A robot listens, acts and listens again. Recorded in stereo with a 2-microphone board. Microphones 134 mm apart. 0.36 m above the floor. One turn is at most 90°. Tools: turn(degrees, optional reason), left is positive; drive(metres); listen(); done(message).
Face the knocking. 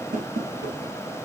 turn(degrees=-90)
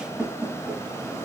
done("Found it: knocking, straight ahead.")